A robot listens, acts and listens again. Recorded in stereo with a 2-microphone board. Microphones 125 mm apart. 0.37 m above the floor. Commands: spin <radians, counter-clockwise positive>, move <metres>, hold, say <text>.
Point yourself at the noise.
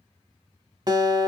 spin -0.61
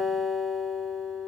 say Found it: a guitar, straight ahead.